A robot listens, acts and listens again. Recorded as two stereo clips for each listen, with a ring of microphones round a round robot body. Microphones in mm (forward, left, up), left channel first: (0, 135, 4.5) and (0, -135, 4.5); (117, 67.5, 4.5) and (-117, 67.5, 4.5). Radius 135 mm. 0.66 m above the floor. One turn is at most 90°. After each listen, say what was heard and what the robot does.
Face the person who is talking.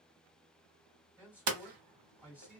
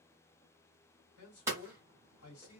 Facing the man speaking, 1 to 2 m away.